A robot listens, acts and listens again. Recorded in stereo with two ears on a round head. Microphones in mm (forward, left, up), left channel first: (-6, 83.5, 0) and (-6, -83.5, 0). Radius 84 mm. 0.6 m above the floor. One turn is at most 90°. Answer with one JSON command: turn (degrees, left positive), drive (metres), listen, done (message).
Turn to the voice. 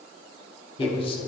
{"turn": 30}
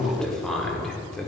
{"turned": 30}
{"done": "Found it: a man speaking, straight ahead."}